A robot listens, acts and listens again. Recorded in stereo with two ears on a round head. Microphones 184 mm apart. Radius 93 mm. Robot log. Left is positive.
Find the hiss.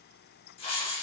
note: The hiss: about 30° left or 150° left.
cmd yaw +30
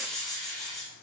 end: Facing the hiss, 2 to 4 m away.